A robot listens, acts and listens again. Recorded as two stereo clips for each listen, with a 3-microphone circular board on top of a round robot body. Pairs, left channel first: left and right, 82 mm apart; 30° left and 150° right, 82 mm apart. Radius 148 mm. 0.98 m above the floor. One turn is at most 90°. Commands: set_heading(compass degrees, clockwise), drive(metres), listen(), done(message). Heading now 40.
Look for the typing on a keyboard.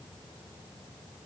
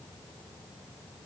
listen()
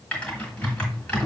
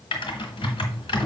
set_heading(25)
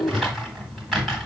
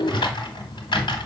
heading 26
done("Found it: typing on a keyboard, straight ahead, 1 to 2 m away.")